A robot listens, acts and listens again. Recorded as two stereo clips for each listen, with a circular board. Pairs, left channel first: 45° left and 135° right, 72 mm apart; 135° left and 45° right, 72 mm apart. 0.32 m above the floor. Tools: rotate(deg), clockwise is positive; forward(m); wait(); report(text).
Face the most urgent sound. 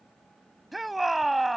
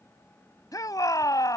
rotate(-135)
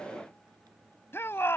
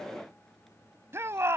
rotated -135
report("Facing the shout.")